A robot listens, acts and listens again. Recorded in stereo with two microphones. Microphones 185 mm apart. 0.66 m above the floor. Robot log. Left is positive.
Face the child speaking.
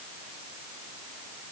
cmd idle
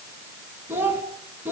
cmd yaw -30
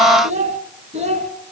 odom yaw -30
note: So it is at 145° right.
cmd yaw -145
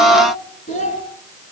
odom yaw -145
note: The child speaking is now 40° left.
cmd yaw +40
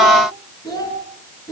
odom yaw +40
note: The child speaking is now 20° left.
cmd yaw +20
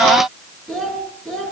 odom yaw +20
end: Facing the child speaking.